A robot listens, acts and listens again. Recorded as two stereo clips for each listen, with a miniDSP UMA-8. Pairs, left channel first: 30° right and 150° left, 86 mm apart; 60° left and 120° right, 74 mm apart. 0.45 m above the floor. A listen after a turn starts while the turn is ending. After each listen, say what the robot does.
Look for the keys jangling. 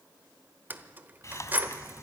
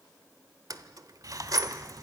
Turn 145° right.
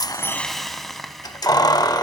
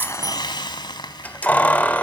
Facing the keys jangling.